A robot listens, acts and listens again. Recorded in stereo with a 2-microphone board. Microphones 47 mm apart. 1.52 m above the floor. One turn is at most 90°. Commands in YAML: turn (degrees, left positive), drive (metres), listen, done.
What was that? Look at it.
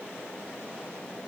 listen: true
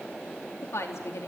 turn: 90
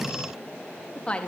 turn: 25
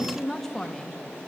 turn: 10
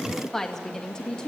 turn: 15
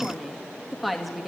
done: "Found it: a woman speaking, straight ahead, 1 to 2 m away."